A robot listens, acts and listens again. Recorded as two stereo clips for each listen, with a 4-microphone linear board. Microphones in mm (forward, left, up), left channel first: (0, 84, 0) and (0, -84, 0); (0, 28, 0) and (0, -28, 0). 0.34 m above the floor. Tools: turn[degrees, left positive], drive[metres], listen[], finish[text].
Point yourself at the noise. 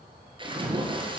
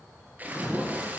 Thought: The splash: about 30° right or 150° right.
Action: turn[-30]
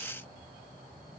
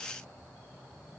Action: listen[]
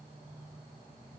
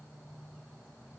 Action: finish[I heard a splash, but can't make it out now. It was about straight ahead or 120° right.]